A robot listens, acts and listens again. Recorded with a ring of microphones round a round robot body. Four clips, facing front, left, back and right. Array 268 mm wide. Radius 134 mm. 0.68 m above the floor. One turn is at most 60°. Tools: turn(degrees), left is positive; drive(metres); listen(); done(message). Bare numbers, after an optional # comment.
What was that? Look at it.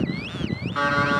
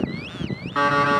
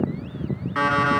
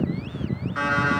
# The alarm clock: 110° left.
turn(60)
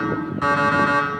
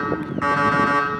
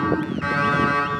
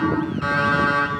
# The alarm clock is now 40° left.
turn(40)
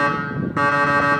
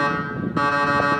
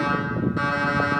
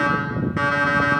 # The alarm clock is now 20° left.
turn(20)
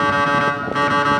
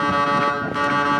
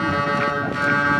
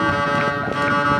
done("Facing the alarm clock.")